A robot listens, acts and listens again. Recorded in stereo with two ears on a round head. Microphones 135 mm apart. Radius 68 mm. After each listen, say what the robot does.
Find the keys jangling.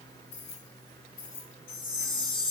Turn 90° left.
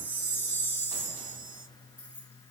Turn 10° right.
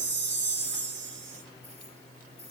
Keep listening.
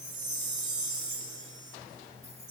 Keep listening.
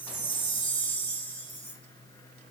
Facing where the keys jangling came from. I can't hear it now.